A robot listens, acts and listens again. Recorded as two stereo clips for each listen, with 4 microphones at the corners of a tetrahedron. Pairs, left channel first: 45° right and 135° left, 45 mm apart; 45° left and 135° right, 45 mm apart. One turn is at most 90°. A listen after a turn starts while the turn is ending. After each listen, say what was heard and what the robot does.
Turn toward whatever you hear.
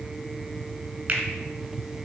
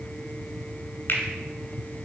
The finger snap: 85° left. Turn 85° left.
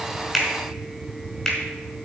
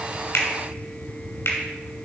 The finger snap is now 35° left. Turn 35° left.
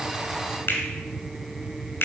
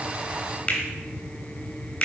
The finger snap is now 10° right. Turn 10° right.
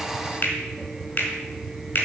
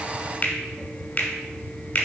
Facing the finger snap, 2 to 4 m away.